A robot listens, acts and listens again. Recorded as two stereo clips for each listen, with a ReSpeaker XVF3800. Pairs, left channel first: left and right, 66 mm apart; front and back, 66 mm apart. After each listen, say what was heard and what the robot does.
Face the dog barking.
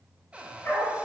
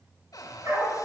The dog barking: 145° left. Turn 145° left.
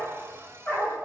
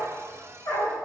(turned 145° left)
The dog barking is now 40° left. Turn 40° left.
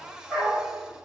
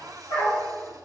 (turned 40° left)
The dog barking is now 10° left. Turn 10° left.
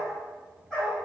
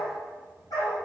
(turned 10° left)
Facing the dog barking.